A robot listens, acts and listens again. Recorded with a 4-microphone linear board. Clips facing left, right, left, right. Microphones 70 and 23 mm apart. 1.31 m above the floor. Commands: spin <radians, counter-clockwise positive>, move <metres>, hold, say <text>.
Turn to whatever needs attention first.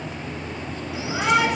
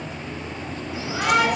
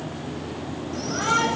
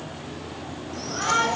spin 0.35
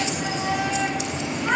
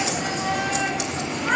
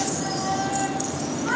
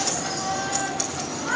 say Found it: a shout, straight ahead.